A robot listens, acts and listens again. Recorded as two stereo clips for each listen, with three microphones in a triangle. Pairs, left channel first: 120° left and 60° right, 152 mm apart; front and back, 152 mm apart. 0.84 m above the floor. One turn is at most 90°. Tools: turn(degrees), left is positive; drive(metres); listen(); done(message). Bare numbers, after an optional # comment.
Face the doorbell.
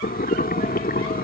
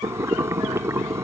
listen()
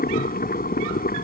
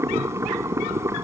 listen()
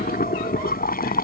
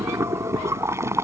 done("I can't make out a doorbell to turn to.")